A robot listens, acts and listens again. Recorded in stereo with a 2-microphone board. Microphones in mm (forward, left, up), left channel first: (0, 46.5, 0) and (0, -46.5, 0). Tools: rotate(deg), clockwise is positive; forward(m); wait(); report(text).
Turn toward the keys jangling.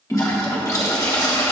wait()
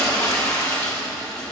wait()
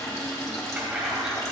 rotate(30)
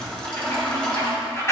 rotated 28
rotate(-30)
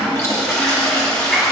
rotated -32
wait()
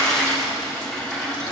wait()
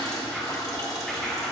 report("Facing where the keys jangling came from. I can't hear it now.")